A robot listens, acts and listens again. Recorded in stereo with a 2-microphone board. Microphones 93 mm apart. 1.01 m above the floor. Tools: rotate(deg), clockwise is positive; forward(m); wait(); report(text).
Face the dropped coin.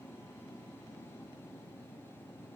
wait()
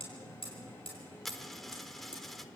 rotate(-30)
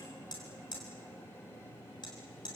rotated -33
wait()
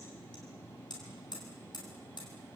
report("I heard a dropped coin, but can't make it out now. It was about 30° right or 145° left.")